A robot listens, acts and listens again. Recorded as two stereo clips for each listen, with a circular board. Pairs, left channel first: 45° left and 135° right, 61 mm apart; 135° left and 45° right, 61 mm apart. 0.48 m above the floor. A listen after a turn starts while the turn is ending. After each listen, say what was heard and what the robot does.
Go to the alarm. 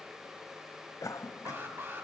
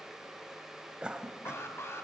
The alarm: 175° left. Turn 175° left.
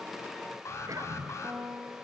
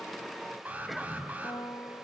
The alarm is now 15° left. Turn 15° left.
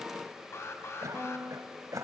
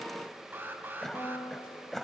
Drive 1.0 m forward.
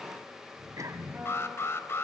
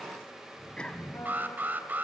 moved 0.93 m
The alarm is now 10° left. Turn 10° left.
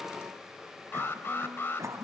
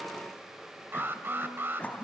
Drive 1.0 m forward.
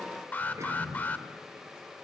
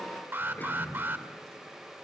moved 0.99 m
Drive 1.0 m forward.
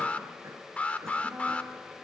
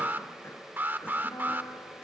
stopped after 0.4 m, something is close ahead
The alarm is now 10° right. Turn 10° right.
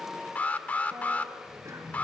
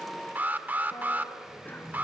I am next to the alarm.